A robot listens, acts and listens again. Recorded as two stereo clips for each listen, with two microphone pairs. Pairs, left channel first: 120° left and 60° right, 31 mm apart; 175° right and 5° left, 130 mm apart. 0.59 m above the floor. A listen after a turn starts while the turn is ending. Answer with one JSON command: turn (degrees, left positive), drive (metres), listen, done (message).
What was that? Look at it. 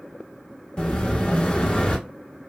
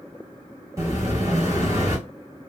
{"turn": 65}
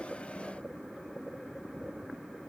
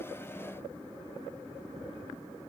{"done": "I heard an explosion from this way, but can't make it out now."}